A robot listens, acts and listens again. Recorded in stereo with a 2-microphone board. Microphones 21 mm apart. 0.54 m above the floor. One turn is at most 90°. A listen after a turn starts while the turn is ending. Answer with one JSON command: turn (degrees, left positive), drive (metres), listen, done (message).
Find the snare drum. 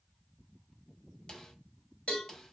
{"turn": 30}
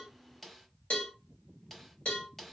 {"done": "Facing the snare drum."}